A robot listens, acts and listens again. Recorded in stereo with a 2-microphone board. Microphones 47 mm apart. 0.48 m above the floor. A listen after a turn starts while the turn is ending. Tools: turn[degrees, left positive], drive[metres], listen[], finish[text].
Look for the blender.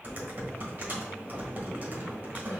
Action: listen[]
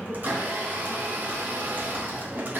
Thought: The blender: about 45° right or 135° right.
Action: turn[-45]
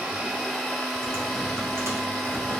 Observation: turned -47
Action: finish[Facing the blender, 1 to 2 m away.]